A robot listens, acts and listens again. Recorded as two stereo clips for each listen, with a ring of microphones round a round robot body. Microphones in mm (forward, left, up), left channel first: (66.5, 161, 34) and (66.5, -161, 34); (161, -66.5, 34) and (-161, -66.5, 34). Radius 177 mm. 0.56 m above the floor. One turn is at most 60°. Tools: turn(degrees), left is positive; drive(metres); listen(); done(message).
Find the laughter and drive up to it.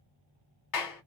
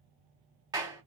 listen()
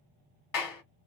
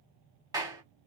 listen()
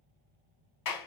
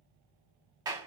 done("I can't make out laughter, only a clap.")